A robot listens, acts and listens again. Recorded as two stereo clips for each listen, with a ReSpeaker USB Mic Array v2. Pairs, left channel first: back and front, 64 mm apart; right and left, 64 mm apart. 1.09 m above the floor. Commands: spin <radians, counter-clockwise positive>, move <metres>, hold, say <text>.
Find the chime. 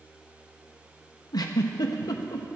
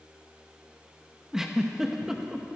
hold
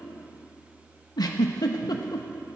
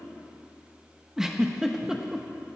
hold
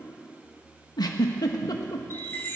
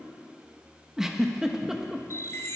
spin -2.27
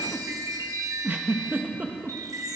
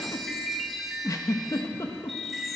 say Facing the chime, 1 to 2 m away.